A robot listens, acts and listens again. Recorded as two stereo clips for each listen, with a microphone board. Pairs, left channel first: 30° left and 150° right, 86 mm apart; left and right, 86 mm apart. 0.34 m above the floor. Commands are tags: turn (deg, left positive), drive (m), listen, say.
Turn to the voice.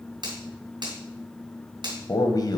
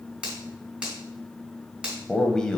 <turn deg="10"/>
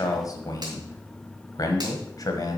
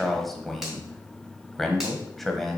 <say>Facing the man speaking.</say>